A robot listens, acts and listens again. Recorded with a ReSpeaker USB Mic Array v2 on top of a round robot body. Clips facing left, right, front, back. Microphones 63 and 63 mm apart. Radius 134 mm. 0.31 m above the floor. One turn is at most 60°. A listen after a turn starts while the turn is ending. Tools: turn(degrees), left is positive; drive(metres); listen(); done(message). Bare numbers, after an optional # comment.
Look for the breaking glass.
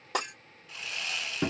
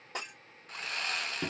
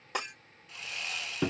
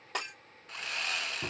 # The breaking glass: 85° left.
turn(60)
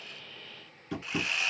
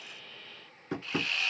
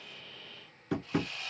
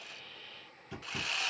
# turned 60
# Nothing new. It was at 25° left.
turn(25)
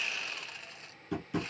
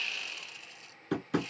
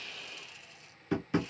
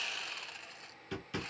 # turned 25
done("Facing where the breaking glass came from. I can't hear it now.")